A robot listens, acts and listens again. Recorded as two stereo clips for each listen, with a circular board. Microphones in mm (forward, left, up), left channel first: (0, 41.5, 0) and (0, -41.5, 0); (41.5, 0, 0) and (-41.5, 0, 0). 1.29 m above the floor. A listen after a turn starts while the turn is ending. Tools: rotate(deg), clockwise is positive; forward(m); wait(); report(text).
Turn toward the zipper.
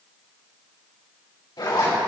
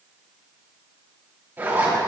rotate(-115)
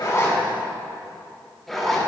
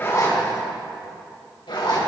report("Facing the zipper, 2 to 4 m away.")